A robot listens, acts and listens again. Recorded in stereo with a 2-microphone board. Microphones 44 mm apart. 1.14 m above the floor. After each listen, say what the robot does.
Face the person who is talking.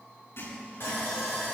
Keep listening.
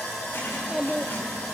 Turn 30° right.
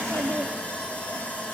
Turn 110° right.
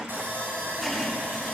Keep listening.
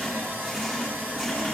Keep listening.
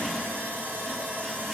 I heard a child speaking from this way, but can't make it out now.